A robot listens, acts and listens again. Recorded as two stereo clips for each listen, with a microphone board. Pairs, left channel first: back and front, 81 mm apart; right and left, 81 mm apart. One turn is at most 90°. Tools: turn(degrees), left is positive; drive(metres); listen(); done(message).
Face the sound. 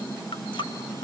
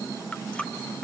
turn(degrees=-90)
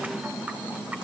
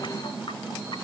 turn(degrees=-75)
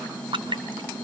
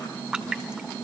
turn(degrees=10)
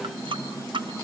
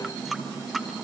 done("Found it: a running tap, straight ahead, 2 to 4 m away.")